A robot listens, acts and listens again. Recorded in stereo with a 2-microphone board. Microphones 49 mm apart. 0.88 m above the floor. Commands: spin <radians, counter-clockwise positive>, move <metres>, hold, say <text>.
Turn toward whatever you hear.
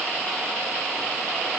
hold
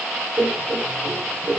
spin -1.22
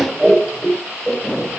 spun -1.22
spin -0.17
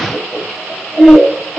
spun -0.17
say Facing the laughter.